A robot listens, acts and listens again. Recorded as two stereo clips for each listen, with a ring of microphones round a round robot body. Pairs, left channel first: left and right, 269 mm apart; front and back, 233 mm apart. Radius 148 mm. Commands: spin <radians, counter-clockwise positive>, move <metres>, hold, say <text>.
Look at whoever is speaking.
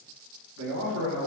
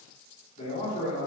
spin -1.05
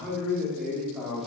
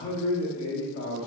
say Found it: a man speaking, straight ahead.